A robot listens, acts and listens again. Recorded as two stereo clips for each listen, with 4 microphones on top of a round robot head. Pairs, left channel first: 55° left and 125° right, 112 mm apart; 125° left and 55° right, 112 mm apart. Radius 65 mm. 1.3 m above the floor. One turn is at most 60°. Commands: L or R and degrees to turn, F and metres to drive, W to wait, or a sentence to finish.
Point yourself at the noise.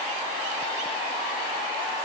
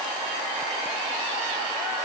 W
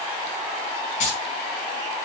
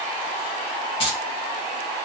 L60
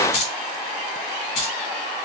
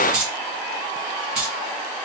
L25
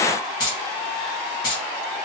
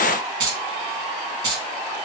Found it: keys jangling, straight ahead, 1 to 2 m away.